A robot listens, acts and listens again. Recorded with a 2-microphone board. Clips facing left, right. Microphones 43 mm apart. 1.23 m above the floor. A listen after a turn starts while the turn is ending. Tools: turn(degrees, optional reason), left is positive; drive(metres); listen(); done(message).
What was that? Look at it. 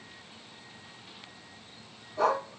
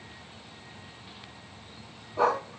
turn(degrees=-30, reason="The dog barking: about 30° right or 150° right.")
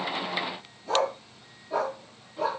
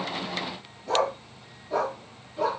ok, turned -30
done("Facing the dog barking, over 4 m away.")